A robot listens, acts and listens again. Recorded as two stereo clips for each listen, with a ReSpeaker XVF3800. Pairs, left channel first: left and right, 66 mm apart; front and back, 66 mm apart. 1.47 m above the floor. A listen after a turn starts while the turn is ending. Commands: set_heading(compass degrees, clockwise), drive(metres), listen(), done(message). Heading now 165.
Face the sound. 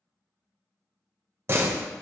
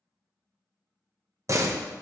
set_heading(305)
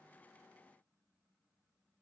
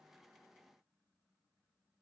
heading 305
done("I heard a door slam from this way, but can't make it out now.")